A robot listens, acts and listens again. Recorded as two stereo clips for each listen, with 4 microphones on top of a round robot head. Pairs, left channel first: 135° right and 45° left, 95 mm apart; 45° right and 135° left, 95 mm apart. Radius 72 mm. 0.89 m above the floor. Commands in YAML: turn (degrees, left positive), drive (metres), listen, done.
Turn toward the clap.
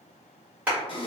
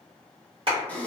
turn: 120
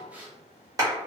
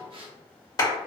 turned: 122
done: "Found it: a clap, straight ahead, 1 to 2 m away."